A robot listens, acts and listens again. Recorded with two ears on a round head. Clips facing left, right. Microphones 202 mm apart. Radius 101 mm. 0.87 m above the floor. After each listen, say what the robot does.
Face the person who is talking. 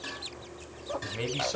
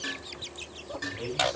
Turn 70° left.
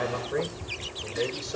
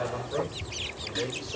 Turn 20° left.
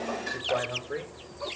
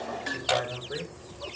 Facing the man speaking.